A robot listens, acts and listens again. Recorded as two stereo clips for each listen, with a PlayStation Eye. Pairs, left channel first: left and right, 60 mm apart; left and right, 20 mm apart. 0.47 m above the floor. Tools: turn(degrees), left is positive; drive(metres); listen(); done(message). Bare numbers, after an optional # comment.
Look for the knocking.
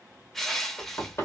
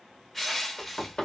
# The knocking: about 55° left or 125° left.
turn(55)
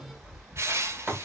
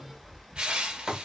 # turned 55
# So it is at 10° left.
turn(10)
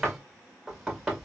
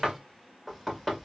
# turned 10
done("Found it: knocking, straight ahead, 1 to 2 m away.")